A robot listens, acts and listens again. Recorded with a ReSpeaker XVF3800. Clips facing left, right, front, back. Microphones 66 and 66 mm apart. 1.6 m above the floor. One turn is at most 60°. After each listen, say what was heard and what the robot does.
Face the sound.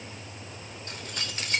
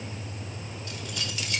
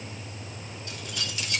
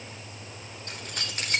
The keys jangling: 140° left. Turn 60° left.
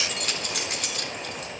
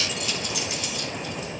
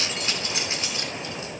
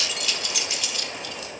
The keys jangling is now 60° left. Turn 60° left.
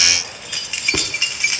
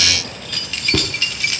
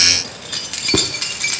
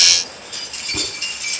The keys jangling is now 20° left. Turn 20° left.
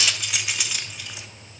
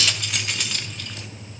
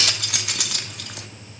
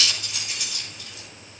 The keys jangling is now 10° left. Turn 10° left.
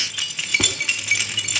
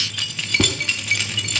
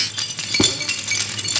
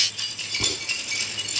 Found it: keys jangling, straight ahead.